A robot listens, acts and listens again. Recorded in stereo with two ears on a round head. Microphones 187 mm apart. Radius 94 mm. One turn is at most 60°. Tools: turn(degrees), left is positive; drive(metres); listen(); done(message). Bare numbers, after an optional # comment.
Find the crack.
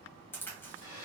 turn(30)
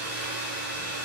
listen()
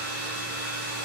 done("I heard a crack, but can't make it out now. It was about 20° right or 140° left.")